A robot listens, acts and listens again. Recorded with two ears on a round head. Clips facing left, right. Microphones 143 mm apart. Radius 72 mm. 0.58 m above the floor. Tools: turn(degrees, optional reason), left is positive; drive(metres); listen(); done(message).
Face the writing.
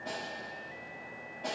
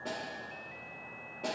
listen()
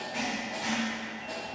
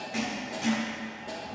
turn(degrees=-60, reason="The writing: about 60° right or 120° right.")
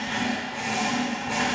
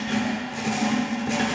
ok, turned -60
turn(degrees=-55, reason="So it is at 55° right.")
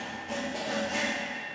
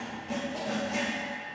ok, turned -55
done("Facing the writing.")